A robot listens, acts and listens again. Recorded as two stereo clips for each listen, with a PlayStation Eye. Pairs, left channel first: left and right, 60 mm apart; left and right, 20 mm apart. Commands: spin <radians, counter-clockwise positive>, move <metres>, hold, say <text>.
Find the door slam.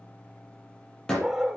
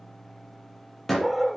spin 0.52
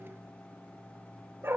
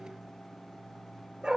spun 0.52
hold
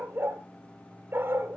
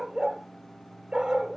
say I heard a door slam, but can't make it out now. It was about 20° right or 140° left.